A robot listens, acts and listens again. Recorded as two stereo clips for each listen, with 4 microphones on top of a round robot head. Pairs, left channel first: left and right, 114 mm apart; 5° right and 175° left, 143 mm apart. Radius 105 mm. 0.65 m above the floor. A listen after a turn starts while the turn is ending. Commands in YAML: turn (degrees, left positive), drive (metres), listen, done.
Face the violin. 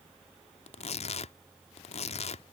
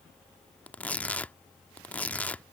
listen: true
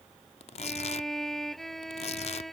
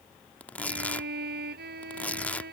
turn: 180
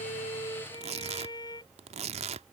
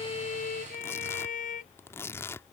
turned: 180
turn: 25
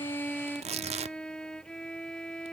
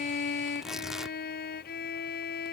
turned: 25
done: "Facing the violin."